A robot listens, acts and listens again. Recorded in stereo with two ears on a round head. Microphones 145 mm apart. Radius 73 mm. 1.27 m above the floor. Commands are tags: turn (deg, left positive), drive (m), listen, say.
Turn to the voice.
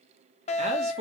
<turn deg="-40"/>
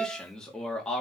<say>Found it: a man speaking, straight ahead, 2 to 4 m away.</say>